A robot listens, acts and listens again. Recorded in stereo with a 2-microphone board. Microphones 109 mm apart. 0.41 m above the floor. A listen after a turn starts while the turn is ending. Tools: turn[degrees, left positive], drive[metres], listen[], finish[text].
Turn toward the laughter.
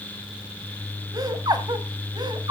Thought: The laughter: about 45° right or 135° right.
Action: turn[-45]
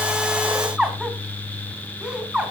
Thought: So it is at 10° right.
Action: turn[-10]
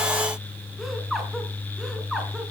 Action: listen[]
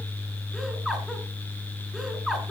Action: finish[Found it: laughter, straight ahead, over 4 m away.]